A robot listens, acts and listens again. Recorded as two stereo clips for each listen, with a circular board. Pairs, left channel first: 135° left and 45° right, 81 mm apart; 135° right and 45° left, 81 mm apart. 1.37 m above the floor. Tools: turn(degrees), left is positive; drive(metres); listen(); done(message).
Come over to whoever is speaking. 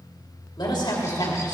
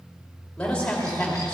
turn(degrees=145)
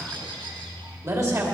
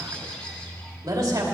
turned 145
drive(metres=1.0)
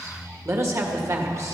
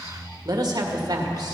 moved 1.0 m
drive(metres=1.0)
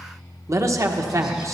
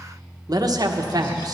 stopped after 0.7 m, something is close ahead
done("Arrived at the man speaking, straight ahead.")